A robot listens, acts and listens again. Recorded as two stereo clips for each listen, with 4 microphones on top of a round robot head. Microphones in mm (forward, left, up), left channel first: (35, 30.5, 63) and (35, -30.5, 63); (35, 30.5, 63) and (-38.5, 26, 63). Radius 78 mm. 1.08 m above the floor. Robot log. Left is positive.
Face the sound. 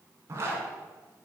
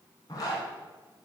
note: The zipper: 45° right.
cmd yaw -45
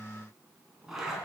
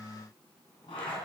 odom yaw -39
end: Found it: a zipper, straight ahead.